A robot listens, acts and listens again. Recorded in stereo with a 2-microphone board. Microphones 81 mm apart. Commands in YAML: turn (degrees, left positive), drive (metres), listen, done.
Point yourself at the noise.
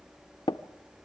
turn: 90
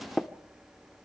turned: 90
done: "Facing the tapping."